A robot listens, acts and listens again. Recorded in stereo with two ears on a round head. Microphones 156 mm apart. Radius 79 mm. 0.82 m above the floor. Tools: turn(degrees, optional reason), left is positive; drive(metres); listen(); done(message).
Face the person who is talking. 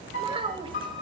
turn(degrees=-30, reason="The child speaking: about 30° right or 150° right.")
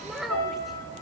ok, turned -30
done("Found it: a child speaking, straight ahead.")